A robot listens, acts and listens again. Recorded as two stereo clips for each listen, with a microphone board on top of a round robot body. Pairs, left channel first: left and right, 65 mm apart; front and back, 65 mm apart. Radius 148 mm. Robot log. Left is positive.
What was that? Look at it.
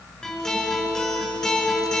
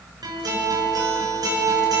note: The guitar: 170° left.
cmd yaw +170
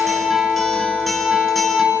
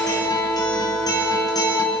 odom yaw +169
end: Facing the guitar, over 4 m away.